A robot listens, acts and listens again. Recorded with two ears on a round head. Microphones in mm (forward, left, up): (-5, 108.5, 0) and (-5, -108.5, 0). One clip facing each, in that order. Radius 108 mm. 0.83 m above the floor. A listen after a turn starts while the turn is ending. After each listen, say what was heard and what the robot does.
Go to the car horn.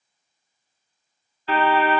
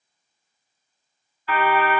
The car horn: about 25° left or 155° left. Turn 25° left.
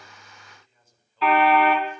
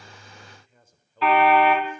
Drive 1.0 m forward.
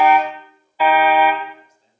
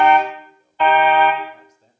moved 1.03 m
Drive 1.0 m forward.
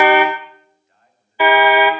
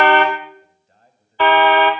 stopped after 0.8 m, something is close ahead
The car horn is now 10° left. Turn 10° left.
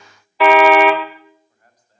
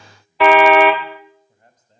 I am next to the car horn.